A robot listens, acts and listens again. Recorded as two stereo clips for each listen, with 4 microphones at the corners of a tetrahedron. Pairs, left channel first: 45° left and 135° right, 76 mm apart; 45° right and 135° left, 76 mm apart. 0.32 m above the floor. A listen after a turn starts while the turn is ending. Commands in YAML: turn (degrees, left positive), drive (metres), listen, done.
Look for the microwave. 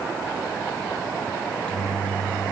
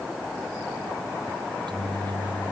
turn: 120
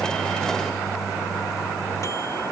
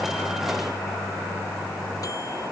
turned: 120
listen: true
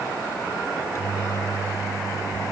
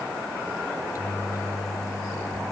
done: "Facing the microwave."